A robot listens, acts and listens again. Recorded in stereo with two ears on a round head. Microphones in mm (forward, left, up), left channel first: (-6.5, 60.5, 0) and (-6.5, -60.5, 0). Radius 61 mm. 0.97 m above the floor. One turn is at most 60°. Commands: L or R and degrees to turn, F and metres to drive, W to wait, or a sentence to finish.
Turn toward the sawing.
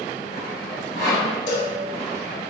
R40
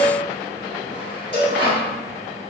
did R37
R10
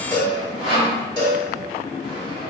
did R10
Found it: sawing, straight ahead, 1 to 2 m away.